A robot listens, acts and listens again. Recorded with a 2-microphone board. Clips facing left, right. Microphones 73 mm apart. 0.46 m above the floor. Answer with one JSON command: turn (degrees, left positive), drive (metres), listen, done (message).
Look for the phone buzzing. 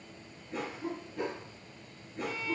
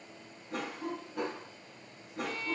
{"listen": true}
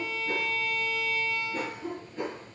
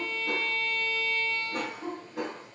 {"listen": true}
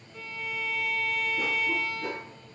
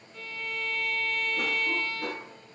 {"done": "I can't make out a phone buzzing, only a cough and a violin."}